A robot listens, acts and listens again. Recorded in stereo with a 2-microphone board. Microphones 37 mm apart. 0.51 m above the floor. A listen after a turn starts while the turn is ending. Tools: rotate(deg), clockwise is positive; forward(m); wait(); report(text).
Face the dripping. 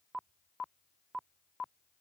wait()
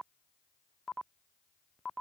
wait()
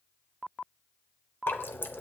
rotate(-65)
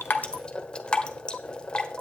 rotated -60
rotate(-25)
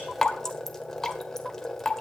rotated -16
rotate(-10)
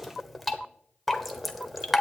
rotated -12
report("Found it: dripping, straight ahead, 1 to 2 m away.")